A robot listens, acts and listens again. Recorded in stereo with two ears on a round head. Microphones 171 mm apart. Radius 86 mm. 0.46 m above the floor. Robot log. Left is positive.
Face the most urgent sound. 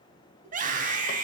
note: The scream: about 45° right or 135° right.
cmd yaw -45
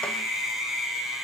end: Facing the scream.